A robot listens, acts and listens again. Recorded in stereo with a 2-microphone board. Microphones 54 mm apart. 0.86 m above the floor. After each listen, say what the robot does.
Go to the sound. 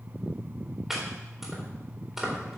Turn 30° right.
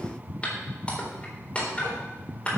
Turn 25° left.
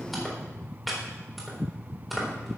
Drive 1.0 m forward.
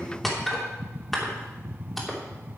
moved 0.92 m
Drive 1.0 m forward.
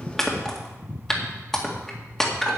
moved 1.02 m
Turn 10° left.
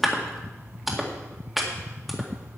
Drive 1.0 m forward.
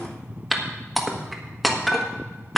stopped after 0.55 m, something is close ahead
Arrived at the chopping, straight ahead.